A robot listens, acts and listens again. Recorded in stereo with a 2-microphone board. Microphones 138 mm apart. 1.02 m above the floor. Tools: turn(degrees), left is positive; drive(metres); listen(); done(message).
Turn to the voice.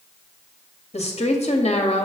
turn(degrees=55)
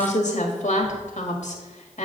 turn(degrees=70)
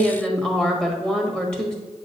done("Found it: a woman speaking, straight ahead.")